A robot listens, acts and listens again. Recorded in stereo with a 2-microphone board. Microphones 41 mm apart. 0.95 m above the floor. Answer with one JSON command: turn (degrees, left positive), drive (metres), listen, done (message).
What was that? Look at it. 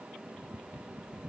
{"listen": true}
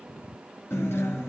{"turn": 75}
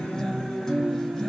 {"turn": 10}
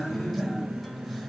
{"done": "Found it: a guitar, straight ahead, 2 to 4 m away."}